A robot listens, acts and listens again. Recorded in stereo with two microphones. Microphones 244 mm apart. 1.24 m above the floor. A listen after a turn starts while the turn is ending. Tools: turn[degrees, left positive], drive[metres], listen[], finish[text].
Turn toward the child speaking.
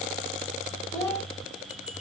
Action: turn[30]
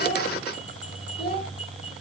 Thought: So it is at 135° left.
Action: turn[135]
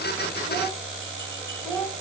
Action: finish[Found it: a child speaking, straight ahead, over 4 m away.]